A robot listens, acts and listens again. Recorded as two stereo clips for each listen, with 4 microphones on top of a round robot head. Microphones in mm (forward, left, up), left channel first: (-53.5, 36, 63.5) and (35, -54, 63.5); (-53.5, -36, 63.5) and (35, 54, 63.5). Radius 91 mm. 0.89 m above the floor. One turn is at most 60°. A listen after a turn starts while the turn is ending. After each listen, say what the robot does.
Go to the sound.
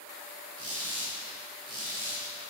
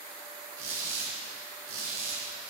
Turn 10° left.
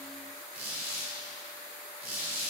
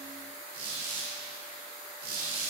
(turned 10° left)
Drive 1.0 m forward.
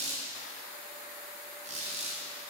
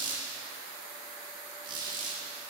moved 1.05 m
Turn 10° right.
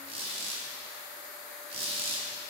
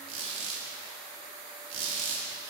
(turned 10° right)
Drive 1.0 m forward.
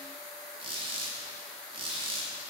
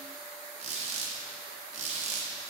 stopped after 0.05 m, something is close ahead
Arrived at the squeak, straight ahead.